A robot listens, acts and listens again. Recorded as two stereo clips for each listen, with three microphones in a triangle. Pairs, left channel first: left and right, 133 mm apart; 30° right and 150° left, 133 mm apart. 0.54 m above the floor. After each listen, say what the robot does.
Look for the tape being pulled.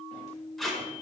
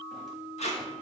Found it: tape being pulled, straight ahead, under 1 m away.